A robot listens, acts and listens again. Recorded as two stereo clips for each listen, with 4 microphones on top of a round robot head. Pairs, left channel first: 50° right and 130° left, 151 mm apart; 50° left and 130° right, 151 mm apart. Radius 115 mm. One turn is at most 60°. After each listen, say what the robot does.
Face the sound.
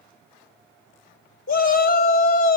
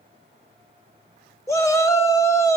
Turn 20° right.
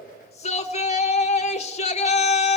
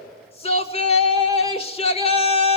Found it: a shout, straight ahead.